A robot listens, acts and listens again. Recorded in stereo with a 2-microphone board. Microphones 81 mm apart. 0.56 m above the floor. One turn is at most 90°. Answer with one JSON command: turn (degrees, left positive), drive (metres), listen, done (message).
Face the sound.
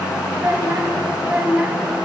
{"turn": -20}
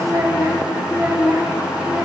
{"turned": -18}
{"turn": -25}
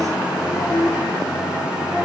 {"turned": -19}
{"turn": -35}
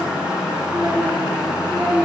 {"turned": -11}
{"turn": -40}
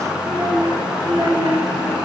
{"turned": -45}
{"turn": -90}
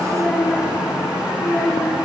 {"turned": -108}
{"turn": 15}
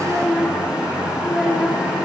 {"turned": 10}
{"done": "Facing the child speaking."}